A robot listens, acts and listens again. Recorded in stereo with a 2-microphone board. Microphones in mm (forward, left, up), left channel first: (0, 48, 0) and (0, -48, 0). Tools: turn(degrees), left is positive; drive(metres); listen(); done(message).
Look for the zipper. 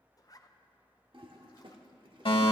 turn(degrees=35)
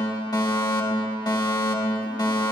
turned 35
listen()
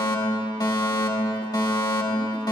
listen()
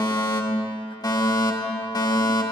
done("I heard a zipper, but can't make it out now. It was about straight ahead or 110° left.")